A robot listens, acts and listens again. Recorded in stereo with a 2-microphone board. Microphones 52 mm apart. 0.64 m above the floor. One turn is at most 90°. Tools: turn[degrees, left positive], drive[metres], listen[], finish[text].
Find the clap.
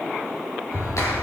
Action: turn[90]
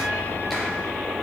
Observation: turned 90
Action: finish[Found it: a clap, straight ahead, over 4 m away.]